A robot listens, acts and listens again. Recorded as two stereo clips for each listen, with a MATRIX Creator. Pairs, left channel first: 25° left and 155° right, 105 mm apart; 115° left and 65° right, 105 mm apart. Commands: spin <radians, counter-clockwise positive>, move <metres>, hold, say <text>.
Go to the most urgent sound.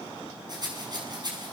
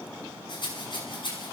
hold
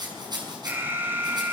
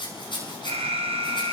spin -1.48
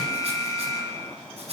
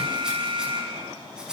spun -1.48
spin -0.61
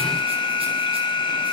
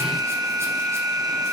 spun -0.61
spin -0.26
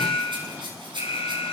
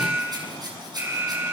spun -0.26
move 1.0
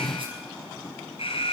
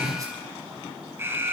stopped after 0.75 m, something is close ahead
say Blocked. The alarm is further on, straight ahead.